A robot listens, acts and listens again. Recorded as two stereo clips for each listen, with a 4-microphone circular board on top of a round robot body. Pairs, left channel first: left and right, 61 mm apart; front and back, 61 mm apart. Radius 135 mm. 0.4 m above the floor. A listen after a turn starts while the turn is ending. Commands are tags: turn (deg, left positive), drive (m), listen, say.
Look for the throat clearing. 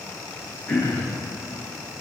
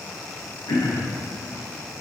<turn deg="25"/>
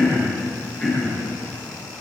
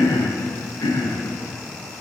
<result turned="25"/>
<turn deg="10"/>
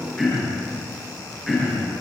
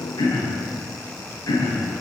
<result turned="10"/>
<say>Found it: throat clearing, straight ahead.</say>